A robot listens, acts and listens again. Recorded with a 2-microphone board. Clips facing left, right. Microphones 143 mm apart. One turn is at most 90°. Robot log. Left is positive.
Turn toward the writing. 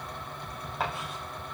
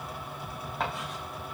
cmd yaw +30
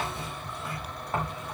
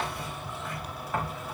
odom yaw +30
note: So it is at 145° left.
cmd yaw +90
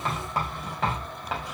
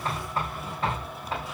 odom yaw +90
note: The writing is now 90° left.
cmd yaw +90
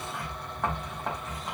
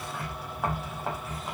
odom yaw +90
end: Found it: writing, straight ahead, over 4 m away.